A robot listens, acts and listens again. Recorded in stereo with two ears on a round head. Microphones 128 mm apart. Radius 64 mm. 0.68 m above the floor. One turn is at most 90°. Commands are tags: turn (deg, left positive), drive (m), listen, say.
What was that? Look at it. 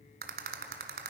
<turn deg="-65"/>
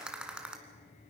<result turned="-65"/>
<say>Facing the rattle, 1 to 2 m away.</say>